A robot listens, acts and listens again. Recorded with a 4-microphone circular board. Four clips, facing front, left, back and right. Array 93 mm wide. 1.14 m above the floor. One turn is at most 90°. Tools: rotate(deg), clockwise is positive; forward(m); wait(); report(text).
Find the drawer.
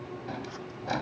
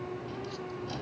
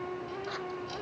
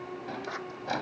rotate(40)
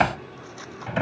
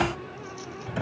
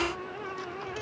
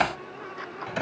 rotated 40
rotate(15)
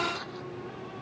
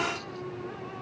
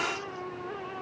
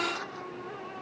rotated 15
wait()
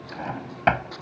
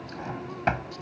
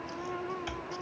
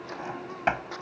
report("Facing the drawer.")